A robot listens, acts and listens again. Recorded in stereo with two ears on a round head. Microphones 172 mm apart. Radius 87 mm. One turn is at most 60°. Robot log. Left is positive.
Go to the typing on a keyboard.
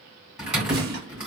cmd yaw -30
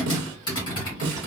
note: So it is at 25° left.
cmd yaw +25
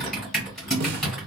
cmd fwd 1.0
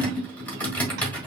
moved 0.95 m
note: The typing on a keyboard is now 10° left.
cmd yaw +10
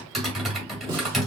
cmd fwd 1.0
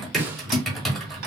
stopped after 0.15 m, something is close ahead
end: I am next to the typing on a keyboard.